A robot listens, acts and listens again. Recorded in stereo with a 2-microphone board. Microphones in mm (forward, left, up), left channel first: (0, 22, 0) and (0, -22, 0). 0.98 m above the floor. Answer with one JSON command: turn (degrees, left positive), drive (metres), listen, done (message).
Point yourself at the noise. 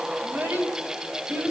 {"turn": -50}
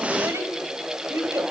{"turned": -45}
{"turn": -80}
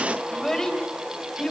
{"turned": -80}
{"turn": 15}
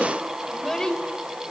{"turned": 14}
{"turn": 10}
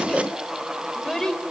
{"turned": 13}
{"turn": 10}
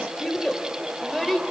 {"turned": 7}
{"done": "Facing the child speaking, 2 to 4 m away."}